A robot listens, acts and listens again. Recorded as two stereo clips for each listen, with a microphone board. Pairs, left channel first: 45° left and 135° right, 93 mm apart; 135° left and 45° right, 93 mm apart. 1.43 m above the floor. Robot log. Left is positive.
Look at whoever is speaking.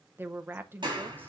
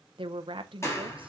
note: The woman speaking: 70° right.
cmd yaw -70
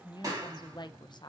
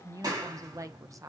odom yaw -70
note: The woman speaking is now 10° left.
cmd yaw +10
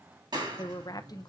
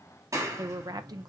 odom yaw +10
end: Facing the woman speaking, under 1 m away.